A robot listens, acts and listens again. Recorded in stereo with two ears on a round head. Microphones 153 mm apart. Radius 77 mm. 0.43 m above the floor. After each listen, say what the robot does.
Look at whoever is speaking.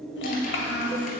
Turn 75° left.
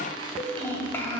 Turn 15° left.
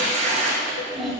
Found it: a child speaking, straight ahead, 1 to 2 m away.